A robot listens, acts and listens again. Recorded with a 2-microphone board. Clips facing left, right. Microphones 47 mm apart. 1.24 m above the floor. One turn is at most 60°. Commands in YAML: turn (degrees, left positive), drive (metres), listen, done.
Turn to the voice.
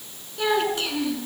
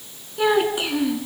turn: -15
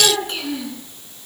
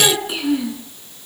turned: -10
turn: -30
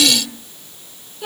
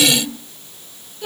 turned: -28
turn: 15
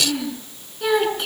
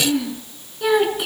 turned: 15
done: "Facing the child speaking."